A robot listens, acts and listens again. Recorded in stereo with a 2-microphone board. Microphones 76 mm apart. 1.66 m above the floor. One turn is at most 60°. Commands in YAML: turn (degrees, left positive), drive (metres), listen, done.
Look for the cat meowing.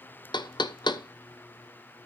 listen: true
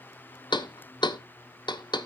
listen: true
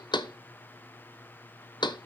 done: "I can't make out a cat meowing, only knocking."